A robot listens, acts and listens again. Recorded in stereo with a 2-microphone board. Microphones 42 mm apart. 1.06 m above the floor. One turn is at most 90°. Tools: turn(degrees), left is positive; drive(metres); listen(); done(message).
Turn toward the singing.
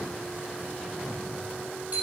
listen()
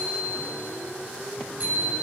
listen()
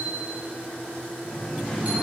turn(degrees=30)
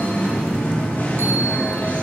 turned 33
turn(degrees=90)
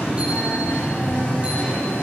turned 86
turn(degrees=55)
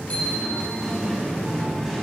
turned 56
done("Found it: singing, straight ahead.")